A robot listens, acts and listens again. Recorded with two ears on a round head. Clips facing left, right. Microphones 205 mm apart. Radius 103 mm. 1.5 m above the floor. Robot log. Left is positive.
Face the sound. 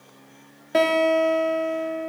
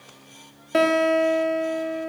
cmd yaw -30
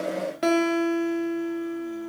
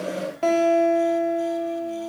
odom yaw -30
note: So it is at 25° left.
cmd yaw +25
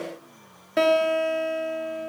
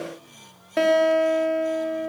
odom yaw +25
end: Facing the guitar.